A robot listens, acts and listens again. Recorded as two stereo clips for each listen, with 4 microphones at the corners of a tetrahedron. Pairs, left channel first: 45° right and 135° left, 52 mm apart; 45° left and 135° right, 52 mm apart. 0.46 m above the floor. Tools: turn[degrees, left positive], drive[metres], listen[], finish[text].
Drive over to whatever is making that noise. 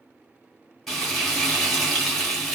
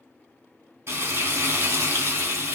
Thought: The frying: 140° right.
Action: turn[-140]
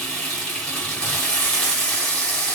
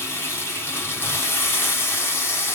Thought: The frying is now 20° left.
Action: turn[20]
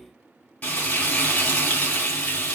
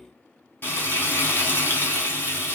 Action: drive[1.0]
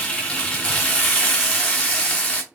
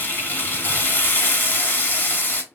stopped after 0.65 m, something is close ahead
Thought: The frying is now 10° left.
Action: turn[10]
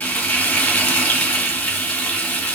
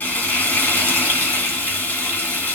Action: finish[I am next to the frying.]